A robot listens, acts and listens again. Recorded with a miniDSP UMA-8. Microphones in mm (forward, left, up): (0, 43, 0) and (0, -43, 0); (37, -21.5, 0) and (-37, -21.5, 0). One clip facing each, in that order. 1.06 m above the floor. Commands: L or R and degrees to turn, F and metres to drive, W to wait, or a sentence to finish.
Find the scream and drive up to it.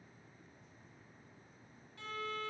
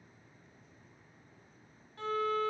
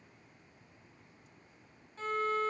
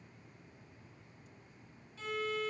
W
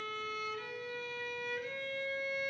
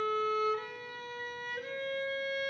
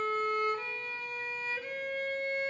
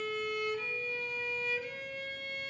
W
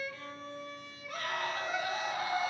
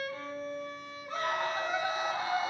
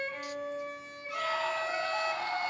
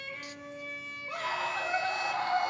R150
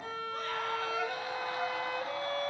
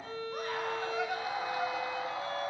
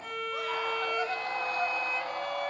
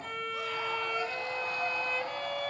R15
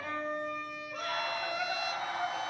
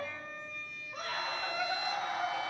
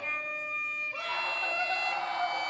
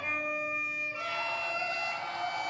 F1.0
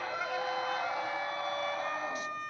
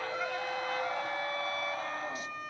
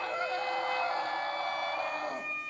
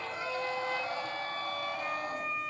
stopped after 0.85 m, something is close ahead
L10
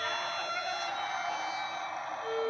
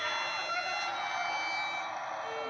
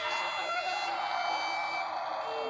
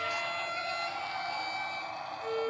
Arrived at the scream, straight ahead.